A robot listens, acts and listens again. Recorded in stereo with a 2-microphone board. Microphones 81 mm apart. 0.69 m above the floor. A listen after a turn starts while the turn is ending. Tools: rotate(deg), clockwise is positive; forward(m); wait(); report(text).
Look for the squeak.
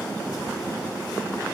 wait()
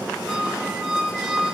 rotate(-30)
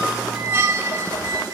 rotate(30)
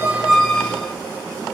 report("Facing the squeak.")